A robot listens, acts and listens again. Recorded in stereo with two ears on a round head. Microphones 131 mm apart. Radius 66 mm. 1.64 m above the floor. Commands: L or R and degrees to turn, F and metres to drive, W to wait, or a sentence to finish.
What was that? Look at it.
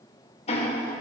L40
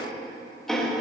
Found it: ticking, straight ahead, 1 to 2 m away.